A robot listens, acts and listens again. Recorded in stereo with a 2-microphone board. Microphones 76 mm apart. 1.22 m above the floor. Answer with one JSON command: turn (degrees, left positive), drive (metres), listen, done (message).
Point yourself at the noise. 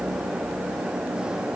{"listen": true}
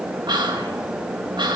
{"turn": -90}
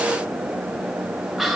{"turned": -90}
{"done": "Found it: whispering, straight ahead, 2 to 4 m away."}